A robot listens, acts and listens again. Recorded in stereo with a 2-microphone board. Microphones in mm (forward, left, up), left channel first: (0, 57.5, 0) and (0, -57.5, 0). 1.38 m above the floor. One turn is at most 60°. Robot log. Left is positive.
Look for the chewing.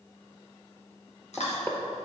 note: The chewing: about 75° left or 105° left.
cmd yaw +60
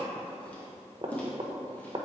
note: So it is at 10° left.
cmd yaw +10
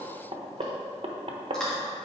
end: Found it: chewing, straight ahead.